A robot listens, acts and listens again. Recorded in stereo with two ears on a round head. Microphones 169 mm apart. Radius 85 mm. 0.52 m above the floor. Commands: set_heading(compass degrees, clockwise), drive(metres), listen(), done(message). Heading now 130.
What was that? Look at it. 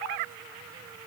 listen()
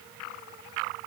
listen()
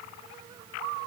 done("I can't make out anything.")